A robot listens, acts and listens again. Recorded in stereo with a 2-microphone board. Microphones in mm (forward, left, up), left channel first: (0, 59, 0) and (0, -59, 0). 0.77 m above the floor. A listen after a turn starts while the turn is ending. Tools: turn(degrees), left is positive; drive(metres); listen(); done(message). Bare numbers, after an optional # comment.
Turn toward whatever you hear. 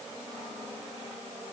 listen()
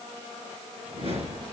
# The whoosh: about 55° right or 125° right.
turn(-55)
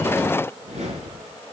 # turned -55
# So it is at 65° right.
turn(-65)
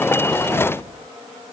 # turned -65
# The whoosh is now 25° left.
turn(25)
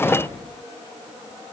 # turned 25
# The whoosh is now 15° left.
turn(15)
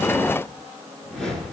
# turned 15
done("Found it: a whoosh, straight ahead, over 4 m away.")